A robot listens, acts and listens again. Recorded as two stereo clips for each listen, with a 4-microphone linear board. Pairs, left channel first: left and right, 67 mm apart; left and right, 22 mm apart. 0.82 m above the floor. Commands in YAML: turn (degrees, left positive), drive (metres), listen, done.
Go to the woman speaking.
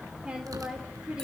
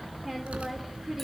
turn: -30
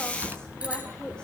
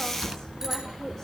turn: 15
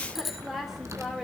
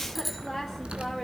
drive: 1.0
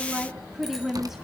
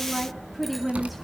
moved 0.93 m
drive: 1.0
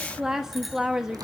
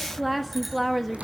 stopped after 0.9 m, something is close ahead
done: "Arrived at the woman speaking, straight ahead."